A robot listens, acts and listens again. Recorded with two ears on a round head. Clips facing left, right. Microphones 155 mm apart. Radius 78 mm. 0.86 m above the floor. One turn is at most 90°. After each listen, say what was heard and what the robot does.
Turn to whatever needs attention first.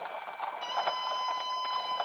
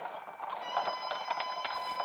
The scream: about 60° left or 120° left. Turn 60° left.
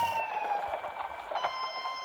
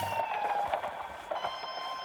Facing the scream, over 4 m away.